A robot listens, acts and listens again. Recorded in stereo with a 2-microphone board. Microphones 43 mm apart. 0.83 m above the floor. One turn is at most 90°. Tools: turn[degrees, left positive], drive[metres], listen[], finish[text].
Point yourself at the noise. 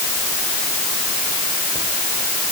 Action: listen[]
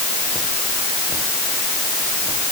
Action: listen[]
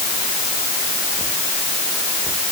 Action: finish[I can't make out anything to turn to.]